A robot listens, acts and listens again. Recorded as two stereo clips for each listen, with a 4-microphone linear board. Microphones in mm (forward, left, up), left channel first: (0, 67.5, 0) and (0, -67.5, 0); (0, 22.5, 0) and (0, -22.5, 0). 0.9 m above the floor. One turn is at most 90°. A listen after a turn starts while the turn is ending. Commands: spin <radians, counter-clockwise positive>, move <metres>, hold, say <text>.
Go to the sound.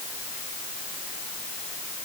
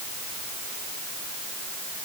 hold
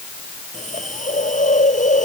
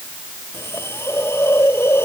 spin 1.57
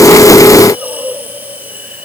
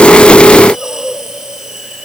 spin -0.17
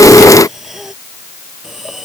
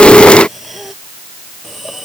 move 1.0
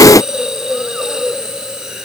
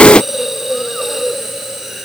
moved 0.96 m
move 1.0
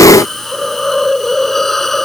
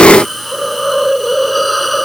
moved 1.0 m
move 1.0
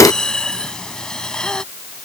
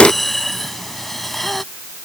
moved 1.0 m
move 1.0
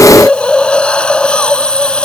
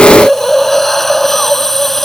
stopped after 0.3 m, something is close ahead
spin 0.17
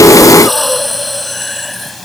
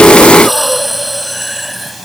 say I am next to the hiss.